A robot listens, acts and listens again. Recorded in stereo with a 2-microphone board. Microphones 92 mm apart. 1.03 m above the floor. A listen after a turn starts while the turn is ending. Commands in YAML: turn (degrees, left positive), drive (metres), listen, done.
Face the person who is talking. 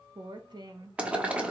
turn: -50
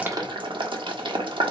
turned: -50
listen: true
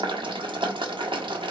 listen: true
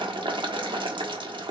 done: "I heard a woman speaking, but can't make it out now. It was about straight ahead or 80° right."